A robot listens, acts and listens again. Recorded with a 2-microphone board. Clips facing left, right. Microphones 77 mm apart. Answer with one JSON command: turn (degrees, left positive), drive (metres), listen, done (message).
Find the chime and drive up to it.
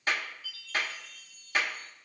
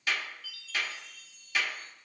{"turn": -65}
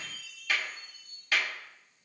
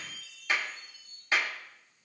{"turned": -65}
{"turn": -40}
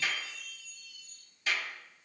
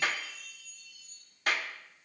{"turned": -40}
{"drive": 1.0}
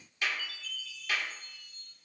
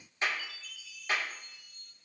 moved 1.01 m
{"turn": -10}
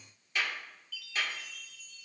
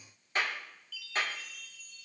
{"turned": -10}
{"drive": 1.0}
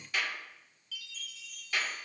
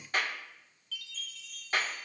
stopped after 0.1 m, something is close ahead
{"done": "Arrived at the chime, straight ahead."}